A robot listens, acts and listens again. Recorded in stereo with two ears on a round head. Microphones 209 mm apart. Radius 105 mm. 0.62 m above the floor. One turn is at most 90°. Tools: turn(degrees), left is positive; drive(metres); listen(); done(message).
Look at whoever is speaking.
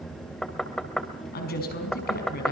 turn(degrees=45)
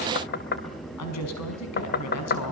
turn(degrees=90)
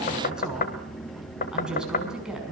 done("Facing the woman speaking, over 4 m away.")